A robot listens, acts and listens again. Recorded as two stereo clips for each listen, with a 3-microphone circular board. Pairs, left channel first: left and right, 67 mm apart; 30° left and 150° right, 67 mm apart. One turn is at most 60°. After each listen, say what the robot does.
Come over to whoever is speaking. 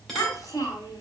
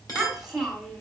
Turn 60° left.
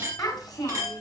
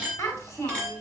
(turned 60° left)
Turn 60° left.
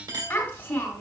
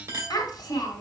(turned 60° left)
Turn 25° left.
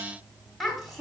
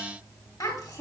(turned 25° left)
Drive 1.0 m forward.
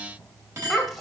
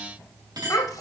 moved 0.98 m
Drive 1.0 m forward.
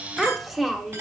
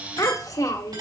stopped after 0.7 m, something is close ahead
I am next to the child speaking.